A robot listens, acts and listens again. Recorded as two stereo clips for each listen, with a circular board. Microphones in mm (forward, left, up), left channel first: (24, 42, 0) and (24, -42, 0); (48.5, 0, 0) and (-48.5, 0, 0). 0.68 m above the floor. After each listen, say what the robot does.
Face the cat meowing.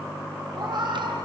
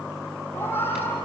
Turn 65° right.
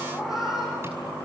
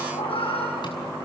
Found it: a cat meowing, straight ahead.